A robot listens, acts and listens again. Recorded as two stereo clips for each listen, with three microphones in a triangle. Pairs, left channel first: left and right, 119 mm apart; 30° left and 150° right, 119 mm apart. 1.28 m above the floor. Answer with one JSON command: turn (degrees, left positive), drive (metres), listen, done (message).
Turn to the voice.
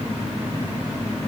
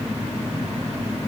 {"listen": true}
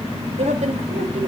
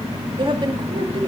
{"turn": -105}
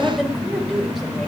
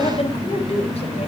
{"done": "Facing the woman speaking."}